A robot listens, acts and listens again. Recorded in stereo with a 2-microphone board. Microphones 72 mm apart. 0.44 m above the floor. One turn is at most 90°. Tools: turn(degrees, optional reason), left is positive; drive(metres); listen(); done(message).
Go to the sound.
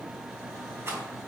listen()
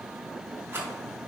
turn(degrees=-35, reason="The rattle: about 35° right or 145° right.")
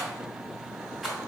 drive(metres=1.0)
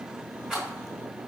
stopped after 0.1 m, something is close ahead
turn(degrees=-10, reason="The rattle is now 10° right.")
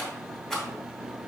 done("Blocked. The rattle is further on, straight ahead.")